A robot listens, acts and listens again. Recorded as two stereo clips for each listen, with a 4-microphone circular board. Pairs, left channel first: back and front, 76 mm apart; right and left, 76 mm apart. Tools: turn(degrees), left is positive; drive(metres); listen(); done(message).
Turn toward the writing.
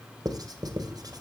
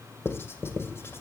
turn(degrees=-30)
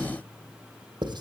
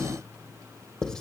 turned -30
turn(degrees=-10)
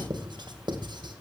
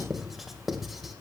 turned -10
done("Found it: writing, straight ahead.")